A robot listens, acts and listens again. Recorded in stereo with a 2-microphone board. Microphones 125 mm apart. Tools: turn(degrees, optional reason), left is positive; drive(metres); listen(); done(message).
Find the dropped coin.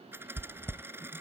turn(degrees=-20, reason="The dropped coin: about 20° right or 160° right.")
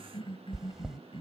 listen()
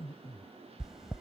done("I heard a dropped coin, but can't make it out now. It was about straight ahead or 140° right.")